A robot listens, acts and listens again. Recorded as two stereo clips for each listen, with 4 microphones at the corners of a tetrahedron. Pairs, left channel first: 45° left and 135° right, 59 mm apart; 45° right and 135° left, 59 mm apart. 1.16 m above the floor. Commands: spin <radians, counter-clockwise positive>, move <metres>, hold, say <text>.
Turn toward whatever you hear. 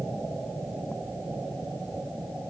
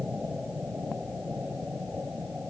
hold
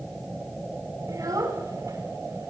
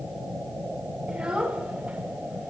spin -2.71
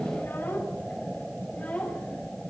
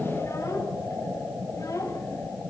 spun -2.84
spin -0.35
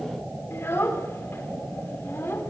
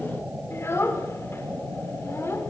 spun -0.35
say Facing the child speaking, 2 to 4 m away.